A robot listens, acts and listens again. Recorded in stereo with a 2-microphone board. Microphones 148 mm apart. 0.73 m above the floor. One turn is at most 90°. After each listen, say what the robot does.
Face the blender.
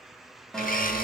Turn 75° left.
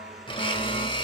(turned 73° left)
Turn 35° left.
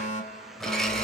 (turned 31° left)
Facing the blender.